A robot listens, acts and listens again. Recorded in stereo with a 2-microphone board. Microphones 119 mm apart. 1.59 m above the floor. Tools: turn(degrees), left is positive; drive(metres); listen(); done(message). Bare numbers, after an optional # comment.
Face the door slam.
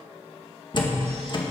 # The door slam: about 45° left or 135° left.
turn(45)
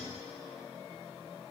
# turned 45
listen()
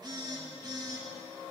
done("I heard a door slam, but can't make it out now. It was about straight ahead or 90° left.")